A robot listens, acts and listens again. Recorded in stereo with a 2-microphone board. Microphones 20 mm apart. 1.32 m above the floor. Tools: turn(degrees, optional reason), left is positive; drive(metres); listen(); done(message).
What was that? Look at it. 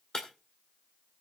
turn(degrees=35, reason="The breaking glass: about 35° left or 145° left.")
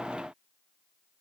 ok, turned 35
listen()
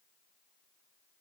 done("I heard breaking glass, but can't make it out now. It was about straight ahead or 110° left.")